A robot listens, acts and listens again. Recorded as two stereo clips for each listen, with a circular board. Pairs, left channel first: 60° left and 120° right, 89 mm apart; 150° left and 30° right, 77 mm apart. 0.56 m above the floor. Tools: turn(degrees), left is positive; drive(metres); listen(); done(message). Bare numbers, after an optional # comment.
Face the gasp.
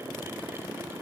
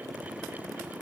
listen()
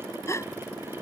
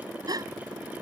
done("Found it: a gasp, straight ahead.")